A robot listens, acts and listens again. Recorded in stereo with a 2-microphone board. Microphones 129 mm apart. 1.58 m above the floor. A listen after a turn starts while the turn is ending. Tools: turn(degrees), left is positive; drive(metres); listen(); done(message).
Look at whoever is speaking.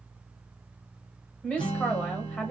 turn(degrees=30)
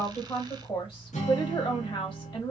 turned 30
turn(degrees=140)
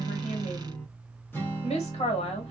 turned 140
turn(degrees=50)
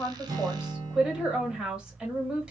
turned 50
done("Found it: a woman speaking, straight ahead.")